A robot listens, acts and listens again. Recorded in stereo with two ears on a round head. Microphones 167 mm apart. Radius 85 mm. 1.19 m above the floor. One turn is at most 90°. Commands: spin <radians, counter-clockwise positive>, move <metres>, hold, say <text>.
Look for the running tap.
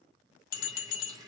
spin -0.35
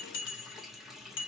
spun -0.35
say Facing the running tap, 1 to 2 m away.